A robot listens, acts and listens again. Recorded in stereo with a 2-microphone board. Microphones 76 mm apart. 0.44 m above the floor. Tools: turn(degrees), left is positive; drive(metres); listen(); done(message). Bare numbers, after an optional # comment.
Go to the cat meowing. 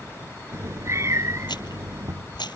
# The cat meowing: about 40° right or 140° right.
turn(-40)
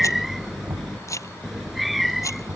drive(1.0)
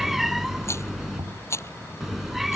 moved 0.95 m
drive(1.0)
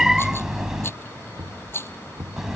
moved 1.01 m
# The cat meowing is now 10° right.
turn(-10)
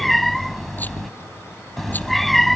drive(1.0)
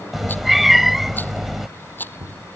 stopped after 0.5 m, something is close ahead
done("Arrived at the cat meowing, straight ahead.")